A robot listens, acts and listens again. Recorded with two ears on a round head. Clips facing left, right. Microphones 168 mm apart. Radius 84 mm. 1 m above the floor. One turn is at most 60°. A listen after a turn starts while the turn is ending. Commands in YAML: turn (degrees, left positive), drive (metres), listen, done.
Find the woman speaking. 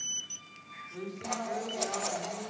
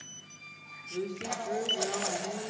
turn: -45
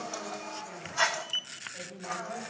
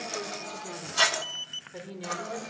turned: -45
turn: -60
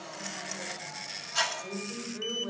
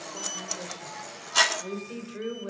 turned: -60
turn: -30
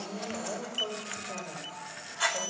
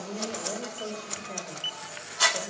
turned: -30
turn: -10
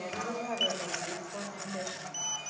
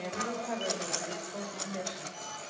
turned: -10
done: "Facing the woman speaking, over 4 m away."